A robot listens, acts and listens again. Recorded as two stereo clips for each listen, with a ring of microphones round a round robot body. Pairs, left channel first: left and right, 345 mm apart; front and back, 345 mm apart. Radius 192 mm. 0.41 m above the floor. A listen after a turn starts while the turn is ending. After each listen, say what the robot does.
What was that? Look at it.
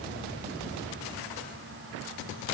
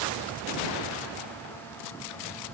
Keep listening.
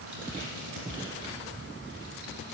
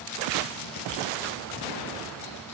Keep listening.
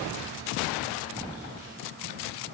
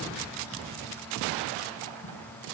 I can't make out anything to turn to.